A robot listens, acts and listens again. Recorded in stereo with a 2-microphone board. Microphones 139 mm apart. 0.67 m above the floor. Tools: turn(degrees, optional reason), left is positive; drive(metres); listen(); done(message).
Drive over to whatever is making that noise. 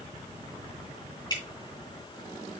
turn(degrees=30, reason="The dripping: about 30° left or 150° left.")
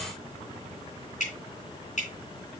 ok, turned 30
turn(degrees=120, reason="So it is at 120° left.")
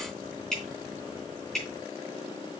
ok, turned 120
drive(metres=1.0)
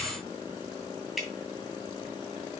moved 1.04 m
drive(metres=1.0)
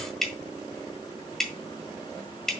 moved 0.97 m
drive(metres=1.0)
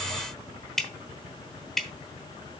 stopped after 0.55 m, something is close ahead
done("I am next to the dripping.")